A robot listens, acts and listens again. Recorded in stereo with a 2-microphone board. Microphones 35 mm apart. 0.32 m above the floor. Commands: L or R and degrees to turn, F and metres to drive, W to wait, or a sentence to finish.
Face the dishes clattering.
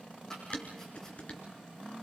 L40
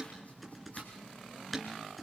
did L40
Found it: dishes clattering, straight ahead.